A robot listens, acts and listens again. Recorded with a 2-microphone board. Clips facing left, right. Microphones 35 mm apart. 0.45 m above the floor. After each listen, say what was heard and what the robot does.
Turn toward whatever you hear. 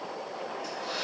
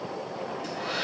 Keep listening.
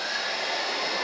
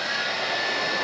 The hair dryer: about 60° right or 120° right. Turn 60° right.
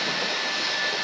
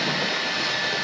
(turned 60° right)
So it is at 15° right. Turn 15° right.
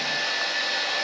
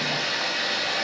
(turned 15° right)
Facing the hair dryer.